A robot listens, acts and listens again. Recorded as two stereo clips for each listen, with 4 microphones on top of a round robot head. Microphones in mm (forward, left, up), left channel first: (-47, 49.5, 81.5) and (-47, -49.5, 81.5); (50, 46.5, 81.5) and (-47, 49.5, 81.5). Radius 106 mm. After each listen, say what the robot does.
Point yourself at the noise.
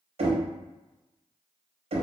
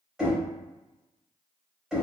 Turn 100° right.
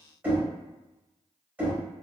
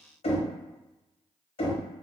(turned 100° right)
Turn 15° right.
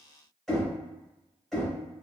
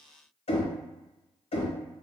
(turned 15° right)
Facing the knocking.